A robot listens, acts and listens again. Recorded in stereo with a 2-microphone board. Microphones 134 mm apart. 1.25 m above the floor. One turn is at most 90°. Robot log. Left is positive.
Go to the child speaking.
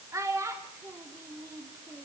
note: The child speaking: about 20° right or 160° right.
cmd yaw -20
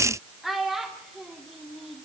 cmd fwd 1.0
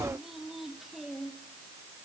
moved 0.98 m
cmd fwd 1.0
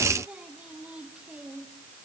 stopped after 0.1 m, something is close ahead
cmd idle
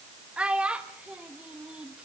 note: The child speaking is now 10° right.
cmd yaw -10
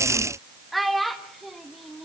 end: I am next to the child speaking.